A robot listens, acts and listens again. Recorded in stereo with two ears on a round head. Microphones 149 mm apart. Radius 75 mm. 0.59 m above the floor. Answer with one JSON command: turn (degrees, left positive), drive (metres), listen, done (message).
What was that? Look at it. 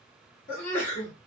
{"turn": 45}
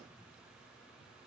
{"listen": true}
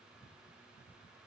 {"done": "I heard a sneeze, but can't make it out now. It was about straight ahead or 90° left."}